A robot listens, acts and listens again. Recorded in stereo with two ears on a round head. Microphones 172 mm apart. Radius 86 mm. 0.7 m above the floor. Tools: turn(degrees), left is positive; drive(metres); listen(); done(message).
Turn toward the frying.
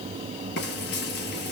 turn(degrees=60)
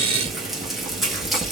done("Facing the frying, 2 to 4 m away.")